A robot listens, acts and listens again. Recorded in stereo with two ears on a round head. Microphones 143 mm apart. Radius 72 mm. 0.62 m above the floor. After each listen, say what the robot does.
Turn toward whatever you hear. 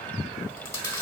Turn 15° left.
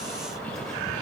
Keep listening.
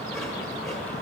Keep listening.
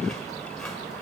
I heard chewing, but can't make it out now. It was about straight ahead or 150° left.